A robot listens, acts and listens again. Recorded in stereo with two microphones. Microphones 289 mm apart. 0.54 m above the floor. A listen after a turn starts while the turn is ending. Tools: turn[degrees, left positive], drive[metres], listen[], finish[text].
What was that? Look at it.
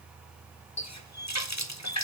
Thought: The running tap: about 65° left or 115° left.
Action: turn[65]
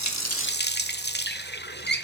Thought: So it is at 40° left.
Action: turn[40]
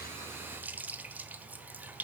Action: finish[Facing the running tap, 1 to 2 m away.]